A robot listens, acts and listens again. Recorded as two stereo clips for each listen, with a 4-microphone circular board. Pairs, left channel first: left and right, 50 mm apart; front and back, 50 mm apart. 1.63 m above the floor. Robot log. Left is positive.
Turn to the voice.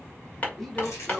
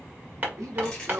note: The man speaking: 175° left.
cmd yaw +175
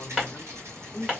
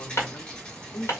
note: The man speaking is now 30° left.
cmd yaw +30
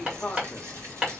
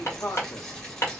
note: The man speaking is now 20° left.
cmd yaw +20
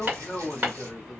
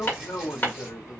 end: Facing the man speaking.